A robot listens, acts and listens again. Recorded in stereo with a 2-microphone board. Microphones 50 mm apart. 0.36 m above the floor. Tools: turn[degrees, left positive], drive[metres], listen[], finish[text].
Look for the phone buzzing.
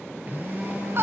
Thought: The phone buzzing: about 35° right or 145° right.
Action: turn[-35]
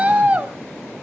Action: listen[]
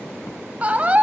Action: listen[]
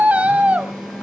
Action: finish[Facing the phone buzzing, over 4 m away.]